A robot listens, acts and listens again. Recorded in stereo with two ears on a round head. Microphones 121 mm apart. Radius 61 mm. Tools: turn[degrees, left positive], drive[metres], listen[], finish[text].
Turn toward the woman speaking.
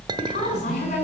Thought: The woman speaking: about 55° left or 125° left.
Action: turn[55]
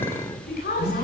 Thought: So it is at 75° left.
Action: turn[75]
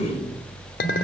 Thought: The woman speaking is now 15° left.
Action: turn[15]
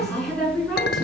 Action: finish[Found it: a woman speaking, straight ahead.]